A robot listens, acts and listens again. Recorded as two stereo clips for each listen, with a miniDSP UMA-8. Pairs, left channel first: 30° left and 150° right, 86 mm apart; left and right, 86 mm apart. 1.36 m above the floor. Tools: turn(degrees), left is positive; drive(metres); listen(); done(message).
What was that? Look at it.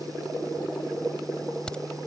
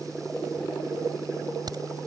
turn(degrees=-50)
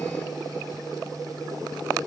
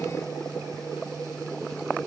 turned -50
done("I heard a crack from this way, but can't make it out now.")